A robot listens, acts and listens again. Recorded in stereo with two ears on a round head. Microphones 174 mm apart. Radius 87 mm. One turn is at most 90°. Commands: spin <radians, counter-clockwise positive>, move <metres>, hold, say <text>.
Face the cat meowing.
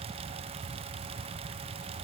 hold
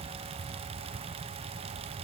hold
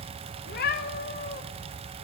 spin 0.87
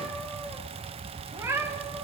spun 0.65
spin -0.26
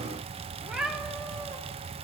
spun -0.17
say Found it: a cat meowing, straight ahead, 2 to 4 m away.